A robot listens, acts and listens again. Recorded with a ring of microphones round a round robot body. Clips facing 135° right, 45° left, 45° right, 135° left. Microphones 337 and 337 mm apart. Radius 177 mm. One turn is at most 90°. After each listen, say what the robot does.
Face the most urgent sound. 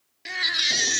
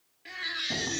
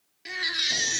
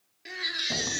Turn 90° right.
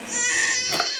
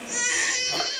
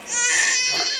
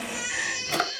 Turn 50° right.
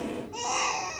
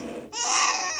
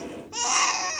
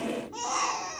Facing the baby crying.